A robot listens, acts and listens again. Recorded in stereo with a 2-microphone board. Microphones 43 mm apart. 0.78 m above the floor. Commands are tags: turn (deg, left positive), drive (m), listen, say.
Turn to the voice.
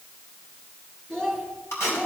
<turn deg="15"/>
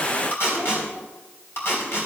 <listen/>
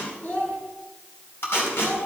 <turn deg="145"/>
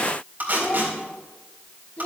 <turn deg="45"/>
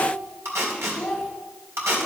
<turn deg="-10"/>
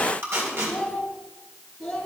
<say>Found it: a child speaking, straight ahead.</say>